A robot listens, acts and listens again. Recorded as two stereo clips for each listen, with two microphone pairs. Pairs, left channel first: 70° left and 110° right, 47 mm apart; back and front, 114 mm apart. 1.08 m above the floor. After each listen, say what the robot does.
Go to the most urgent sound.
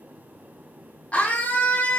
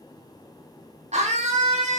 Turn 10° left.
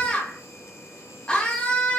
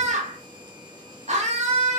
Drive 1.0 m forward.
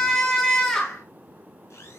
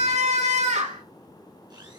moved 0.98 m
Turn 10° right.
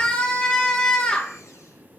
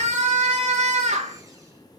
Drive 1.0 m forward.
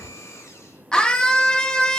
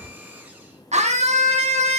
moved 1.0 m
Drive 1.0 m forward.
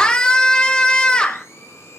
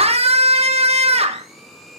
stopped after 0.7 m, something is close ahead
I am next to the scream.